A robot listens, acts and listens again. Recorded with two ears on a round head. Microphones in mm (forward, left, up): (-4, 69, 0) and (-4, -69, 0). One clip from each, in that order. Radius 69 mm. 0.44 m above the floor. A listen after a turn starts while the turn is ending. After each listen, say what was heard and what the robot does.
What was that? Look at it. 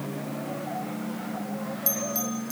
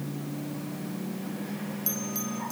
Turn 30° left.
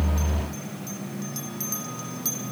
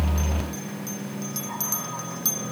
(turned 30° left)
So it is at 15° right. Turn 15° right.
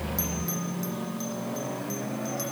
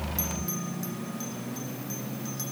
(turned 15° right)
Keep listening.
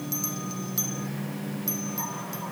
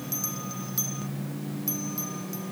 Found it: a bell, straight ahead.